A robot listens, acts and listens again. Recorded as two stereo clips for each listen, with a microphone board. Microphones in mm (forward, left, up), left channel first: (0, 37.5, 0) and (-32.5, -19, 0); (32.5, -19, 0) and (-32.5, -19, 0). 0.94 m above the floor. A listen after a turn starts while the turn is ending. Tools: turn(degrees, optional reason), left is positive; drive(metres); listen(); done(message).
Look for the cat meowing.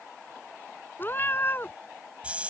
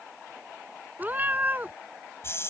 turn(degrees=115, reason="The cat meowing: 115° left.")
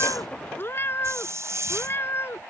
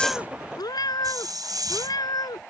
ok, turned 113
turn(degrees=10, reason="The cat meowing is now 10° left.")
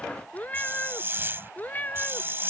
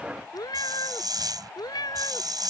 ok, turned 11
done("Found it: a cat meowing, straight ahead.")